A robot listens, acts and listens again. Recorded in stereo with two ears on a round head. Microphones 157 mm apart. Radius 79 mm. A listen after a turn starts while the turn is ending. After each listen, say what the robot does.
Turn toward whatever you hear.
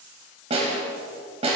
Turn 35° right.
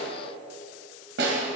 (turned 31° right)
Turn 110° right.
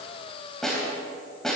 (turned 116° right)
Facing the snare drum.